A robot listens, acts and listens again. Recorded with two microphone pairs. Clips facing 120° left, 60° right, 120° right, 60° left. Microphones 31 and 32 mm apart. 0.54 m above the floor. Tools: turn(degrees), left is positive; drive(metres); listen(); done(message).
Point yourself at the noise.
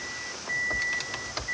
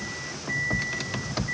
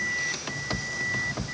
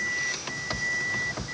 listen()
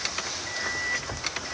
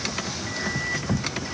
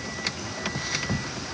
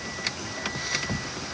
listen()
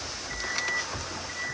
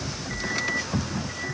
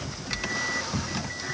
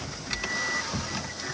done("I can't make out anything.")